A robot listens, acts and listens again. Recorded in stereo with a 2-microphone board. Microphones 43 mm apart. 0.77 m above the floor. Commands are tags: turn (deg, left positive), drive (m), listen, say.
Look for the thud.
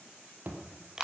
<turn deg="-45"/>
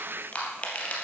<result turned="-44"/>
<listen/>
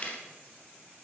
<say>I heard a thud, but can't make it out now. It was about straight ahead or 90° right.</say>